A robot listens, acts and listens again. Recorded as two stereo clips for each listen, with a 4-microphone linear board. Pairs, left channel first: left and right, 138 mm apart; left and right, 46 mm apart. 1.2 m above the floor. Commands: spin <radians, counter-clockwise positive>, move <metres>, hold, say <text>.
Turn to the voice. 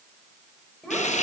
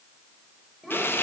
spin 0.52
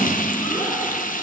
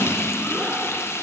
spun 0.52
hold
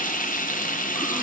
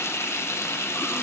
hold
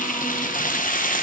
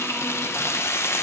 say I heard a child speaking, but can't make it out now. It was about 25° right or 145° left.